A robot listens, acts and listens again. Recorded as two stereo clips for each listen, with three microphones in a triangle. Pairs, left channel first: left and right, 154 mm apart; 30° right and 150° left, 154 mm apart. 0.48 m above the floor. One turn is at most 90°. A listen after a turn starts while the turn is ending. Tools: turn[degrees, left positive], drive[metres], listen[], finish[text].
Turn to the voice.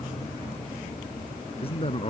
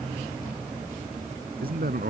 Thought: The man speaking: 140° left.
Action: turn[90]
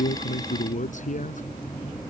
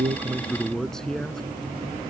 Thought: The man speaking is now 55° left.
Action: turn[55]
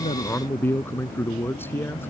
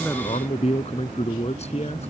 Thought: The man speaking is now 15° left.
Action: turn[15]
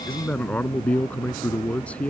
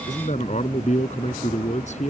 Thought: The man speaking is now 10° left.
Action: turn[10]
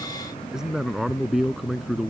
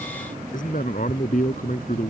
Action: finish[Found it: a man speaking, straight ahead.]